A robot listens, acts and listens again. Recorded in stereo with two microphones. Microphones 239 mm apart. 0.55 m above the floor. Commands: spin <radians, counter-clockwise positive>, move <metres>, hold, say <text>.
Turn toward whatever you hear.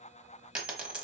spin -0.52
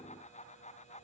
hold
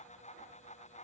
say I heard a dropped coin, but can't make it out now. It was about 25° left or 145° right.